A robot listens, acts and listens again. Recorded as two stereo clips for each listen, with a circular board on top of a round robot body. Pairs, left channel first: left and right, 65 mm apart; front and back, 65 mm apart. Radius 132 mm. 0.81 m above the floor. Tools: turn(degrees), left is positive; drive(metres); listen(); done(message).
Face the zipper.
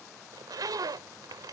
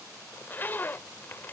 turn(degrees=-60)
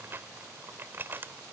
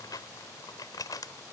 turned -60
turn(degrees=-30)
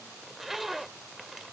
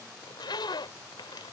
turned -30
done("Found it: a zipper, straight ahead.")